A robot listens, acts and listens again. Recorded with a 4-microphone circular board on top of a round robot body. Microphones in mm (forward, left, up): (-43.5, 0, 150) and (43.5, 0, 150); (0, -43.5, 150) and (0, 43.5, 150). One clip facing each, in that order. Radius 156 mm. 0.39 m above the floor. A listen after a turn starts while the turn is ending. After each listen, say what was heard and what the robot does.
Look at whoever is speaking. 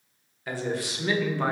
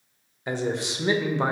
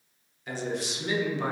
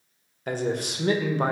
The man speaking: 65° left. Turn 65° left.
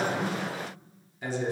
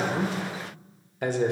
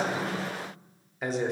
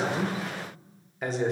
Found it: a man speaking, straight ahead.